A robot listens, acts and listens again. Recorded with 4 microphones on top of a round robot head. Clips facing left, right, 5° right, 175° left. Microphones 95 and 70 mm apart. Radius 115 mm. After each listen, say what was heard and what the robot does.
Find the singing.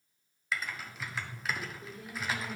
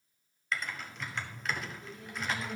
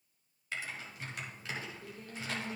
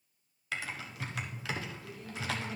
The singing: 50° left. Turn 50° left.
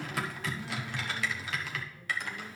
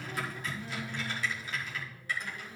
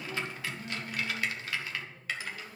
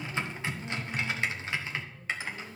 Keep listening.
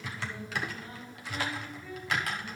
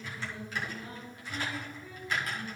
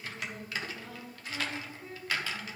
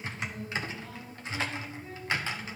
Facing the singing.